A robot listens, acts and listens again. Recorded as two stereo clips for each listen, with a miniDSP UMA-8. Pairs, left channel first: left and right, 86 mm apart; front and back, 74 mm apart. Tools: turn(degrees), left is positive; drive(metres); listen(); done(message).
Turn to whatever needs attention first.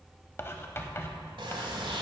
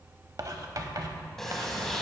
listen()
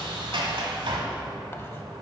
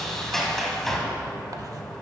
listen()
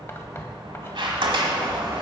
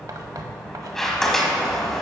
done("I can't make out anything urgent to turn to.")